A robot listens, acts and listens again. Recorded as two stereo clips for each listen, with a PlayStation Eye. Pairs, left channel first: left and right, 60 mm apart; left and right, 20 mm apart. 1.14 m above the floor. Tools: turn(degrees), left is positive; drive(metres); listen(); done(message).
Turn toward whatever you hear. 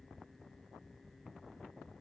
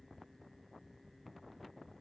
listen()
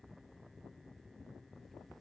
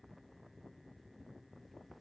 listen()
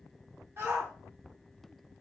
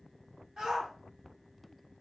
turn(degrees=-40)
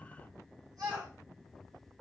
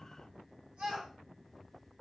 turn(degrees=-95)
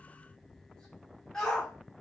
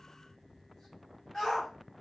turn(degrees=10)
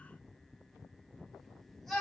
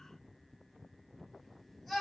done("Facing the shout, 2 to 4 m away.")